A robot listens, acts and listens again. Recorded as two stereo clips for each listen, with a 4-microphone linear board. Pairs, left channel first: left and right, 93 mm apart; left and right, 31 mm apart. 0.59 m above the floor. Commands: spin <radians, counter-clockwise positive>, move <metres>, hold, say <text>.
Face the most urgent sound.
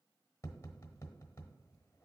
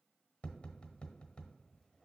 hold
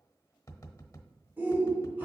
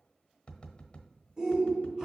spin -0.35
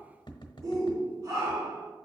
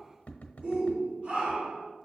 spin -2.36
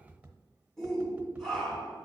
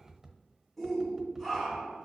say Facing the shout.